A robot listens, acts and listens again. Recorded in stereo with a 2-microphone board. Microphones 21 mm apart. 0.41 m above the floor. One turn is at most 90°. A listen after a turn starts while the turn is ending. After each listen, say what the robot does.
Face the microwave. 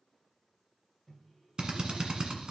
Turn 30° left.
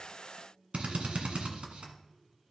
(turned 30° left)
Turn 30° right.
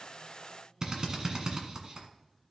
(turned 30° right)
Turn 15° left.
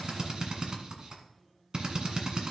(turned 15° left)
Keep listening.
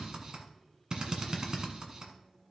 Found it: a microwave, straight ahead.